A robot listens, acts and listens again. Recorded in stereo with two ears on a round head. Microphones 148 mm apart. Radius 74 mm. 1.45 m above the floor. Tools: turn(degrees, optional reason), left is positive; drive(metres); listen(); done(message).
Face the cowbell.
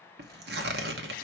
listen()
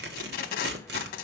listen()
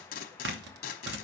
done("I can't make out a cowbell to turn to.")